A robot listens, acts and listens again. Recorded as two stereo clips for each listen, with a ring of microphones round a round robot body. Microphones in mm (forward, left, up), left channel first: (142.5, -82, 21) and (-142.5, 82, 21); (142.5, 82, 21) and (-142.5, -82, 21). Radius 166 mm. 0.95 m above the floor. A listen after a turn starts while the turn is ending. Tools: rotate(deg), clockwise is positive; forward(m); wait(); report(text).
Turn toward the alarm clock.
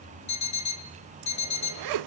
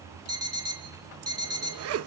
rotate(70)
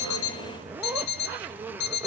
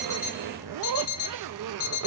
report("Found it: an alarm clock, straight ahead.")